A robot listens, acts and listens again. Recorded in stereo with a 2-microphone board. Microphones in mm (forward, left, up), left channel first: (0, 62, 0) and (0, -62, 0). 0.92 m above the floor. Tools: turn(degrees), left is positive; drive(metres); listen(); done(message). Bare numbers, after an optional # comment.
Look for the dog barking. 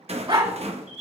# The dog barking: about 50° right or 130° right.
turn(-50)
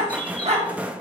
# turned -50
# So it is at 60° right.
turn(-60)
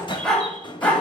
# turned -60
# The dog barking is now 15° left.
turn(15)
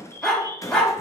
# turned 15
# The dog barking is now 10° left.
turn(10)
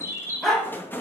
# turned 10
done("Found it: a dog barking, straight ahead.")